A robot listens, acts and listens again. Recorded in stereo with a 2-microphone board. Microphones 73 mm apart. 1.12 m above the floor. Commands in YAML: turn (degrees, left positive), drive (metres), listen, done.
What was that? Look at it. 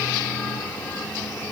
listen: true
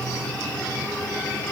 listen: true
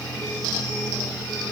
done: "I can't make out anything to turn to."